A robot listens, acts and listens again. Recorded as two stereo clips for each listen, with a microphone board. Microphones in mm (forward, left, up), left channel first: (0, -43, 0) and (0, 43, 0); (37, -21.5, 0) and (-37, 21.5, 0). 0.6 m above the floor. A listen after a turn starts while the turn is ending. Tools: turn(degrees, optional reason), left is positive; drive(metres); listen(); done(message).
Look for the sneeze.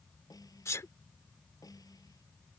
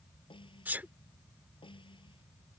turn(degrees=-145, reason="The sneeze: 145° right.")
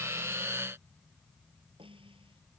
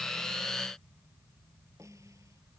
done("I heard a sneeze from this way, but can't make it out now.")